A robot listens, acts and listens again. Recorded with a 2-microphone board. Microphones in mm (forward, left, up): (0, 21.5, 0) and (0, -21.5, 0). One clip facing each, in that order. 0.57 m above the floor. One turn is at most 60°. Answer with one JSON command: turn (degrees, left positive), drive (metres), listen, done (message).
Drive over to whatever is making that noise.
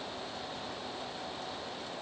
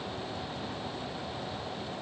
{"listen": true}
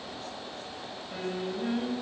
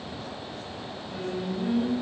{"turn": 30}
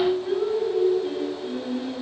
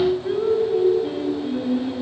{"turn": -15}
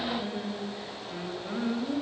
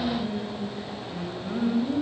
{"drive": 1.0}
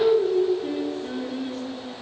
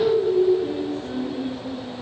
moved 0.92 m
{"turn": 10}
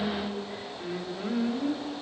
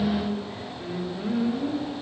{"drive": 1.0}
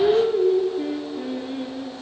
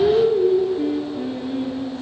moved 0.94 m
{"drive": 1.0}
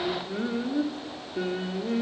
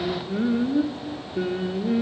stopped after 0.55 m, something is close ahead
{"done": "Arrived at the singing, straight ahead."}